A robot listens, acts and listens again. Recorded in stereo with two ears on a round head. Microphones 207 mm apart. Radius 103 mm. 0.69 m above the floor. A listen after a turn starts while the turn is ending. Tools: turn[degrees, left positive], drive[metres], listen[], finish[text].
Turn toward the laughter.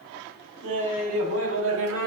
Thought: The laughter: about 75° right or 105° right.
Action: turn[-75]
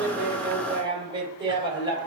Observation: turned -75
Thought: So it is at 20° right.
Action: turn[-20]
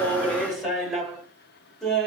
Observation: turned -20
Action: finish[Facing the laughter, 2 to 4 m away.]